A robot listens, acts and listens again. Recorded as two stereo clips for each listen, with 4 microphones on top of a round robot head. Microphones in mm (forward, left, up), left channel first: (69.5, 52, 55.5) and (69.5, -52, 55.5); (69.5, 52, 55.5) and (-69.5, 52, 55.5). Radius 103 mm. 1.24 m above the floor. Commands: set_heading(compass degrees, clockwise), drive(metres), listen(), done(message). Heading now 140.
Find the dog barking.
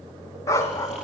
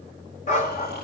set_heading(110)
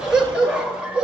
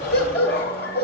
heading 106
set_heading(116)
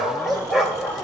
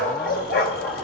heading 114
done("Found it: a dog barking, straight ahead.")